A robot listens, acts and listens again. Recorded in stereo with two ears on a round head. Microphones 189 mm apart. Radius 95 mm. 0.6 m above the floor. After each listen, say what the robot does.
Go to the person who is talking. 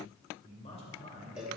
Turn 30° left.
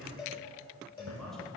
Drive 1.0 m forward.
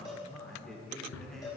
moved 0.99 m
Drive 1.0 m forward.
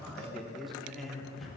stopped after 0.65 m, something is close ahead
I am next to the man speaking.